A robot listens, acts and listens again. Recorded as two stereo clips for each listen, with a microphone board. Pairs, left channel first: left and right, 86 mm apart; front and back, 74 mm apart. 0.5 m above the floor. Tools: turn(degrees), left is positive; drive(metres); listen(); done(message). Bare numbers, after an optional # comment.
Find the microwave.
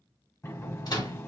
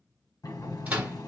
# The microwave: 110° left.
turn(110)
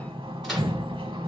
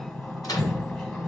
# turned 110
listen()
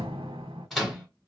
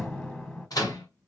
done("Facing the microwave, 1 to 2 m away.")